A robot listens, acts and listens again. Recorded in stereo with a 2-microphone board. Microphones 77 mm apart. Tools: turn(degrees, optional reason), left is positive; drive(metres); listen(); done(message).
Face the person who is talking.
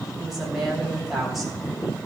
turn(degrees=30)
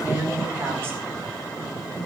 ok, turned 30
turn(degrees=-30, reason="So it is at 30° right.")
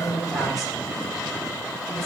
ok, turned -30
done("Found it: a woman speaking, straight ahead.")